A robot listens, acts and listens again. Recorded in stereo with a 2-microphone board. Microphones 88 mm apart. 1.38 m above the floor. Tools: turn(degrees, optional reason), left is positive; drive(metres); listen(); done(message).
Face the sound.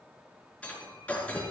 turn(degrees=30)
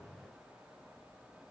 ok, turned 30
listen()
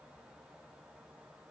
done("I heard breaking glass, but can't make it out now. It was about 15° right or 135° left.")